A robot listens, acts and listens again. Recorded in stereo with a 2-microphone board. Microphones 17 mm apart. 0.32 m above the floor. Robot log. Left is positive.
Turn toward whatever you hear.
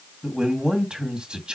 note: The man speaking: about 60° right or 120° right.
cmd yaw -60
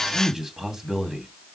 note: So it is at 25° right.
cmd yaw -25
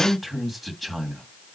end: Found it: a man speaking, straight ahead, 2 to 4 m away.